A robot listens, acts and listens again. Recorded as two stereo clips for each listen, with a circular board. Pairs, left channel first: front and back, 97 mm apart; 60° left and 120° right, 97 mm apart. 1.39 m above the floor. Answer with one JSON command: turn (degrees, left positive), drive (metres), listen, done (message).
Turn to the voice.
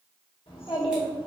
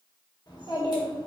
{"turn": 15}
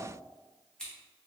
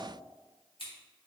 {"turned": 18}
{"listen": true}
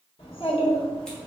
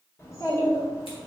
{"done": "Found it: a child speaking, straight ahead."}